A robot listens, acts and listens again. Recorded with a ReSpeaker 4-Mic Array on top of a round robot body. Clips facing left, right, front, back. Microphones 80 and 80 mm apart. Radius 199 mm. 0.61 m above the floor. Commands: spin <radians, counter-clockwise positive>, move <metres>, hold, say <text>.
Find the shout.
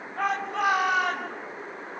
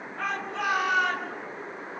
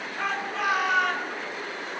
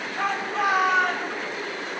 spin 2.18
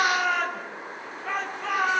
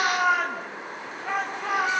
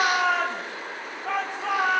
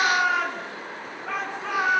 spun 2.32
say Facing the shout, over 4 m away.